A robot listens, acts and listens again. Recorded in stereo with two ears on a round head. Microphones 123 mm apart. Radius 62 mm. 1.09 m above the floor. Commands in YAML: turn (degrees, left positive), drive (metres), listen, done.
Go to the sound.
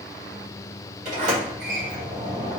turn: -55
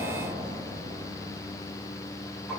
drive: 1.0
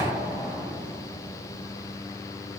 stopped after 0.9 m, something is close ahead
done: "Arrived at the sliding door, straight ahead."